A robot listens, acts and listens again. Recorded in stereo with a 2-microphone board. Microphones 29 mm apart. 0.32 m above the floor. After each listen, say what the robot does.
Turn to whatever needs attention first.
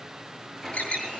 Turn 55° left.
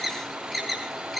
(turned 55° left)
Facing the alarm.